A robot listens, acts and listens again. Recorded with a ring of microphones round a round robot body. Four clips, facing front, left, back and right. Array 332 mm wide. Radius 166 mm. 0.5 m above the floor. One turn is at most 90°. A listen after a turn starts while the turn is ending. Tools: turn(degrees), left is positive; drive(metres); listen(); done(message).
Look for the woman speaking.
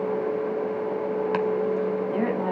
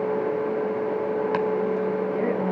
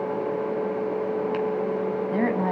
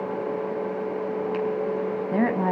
turn(degrees=-90)
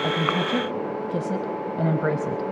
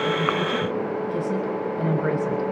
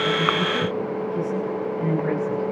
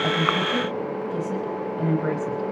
done("Found it: a woman speaking, straight ahead, 2 to 4 m away.")